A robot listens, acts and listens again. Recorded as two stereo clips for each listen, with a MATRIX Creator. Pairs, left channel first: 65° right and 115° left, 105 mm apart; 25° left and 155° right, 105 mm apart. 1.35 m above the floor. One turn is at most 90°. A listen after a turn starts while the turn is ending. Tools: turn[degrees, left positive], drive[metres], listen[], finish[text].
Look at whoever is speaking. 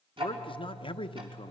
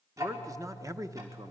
Thought: The man speaking: 100° right.
Action: turn[-90]
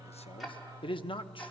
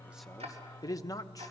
Thought: The man speaking is now 35° right.
Action: turn[-35]
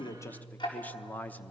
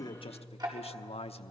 Action: finish[Facing the man speaking, under 1 m away.]